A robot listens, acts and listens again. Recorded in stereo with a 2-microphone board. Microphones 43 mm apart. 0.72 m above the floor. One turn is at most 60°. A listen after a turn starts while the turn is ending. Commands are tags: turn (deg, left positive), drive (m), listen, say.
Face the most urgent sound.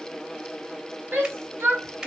<turn deg="-60"/>
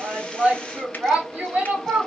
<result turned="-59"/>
<turn deg="-30"/>
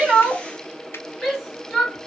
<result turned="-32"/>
<say>Facing the shout.</say>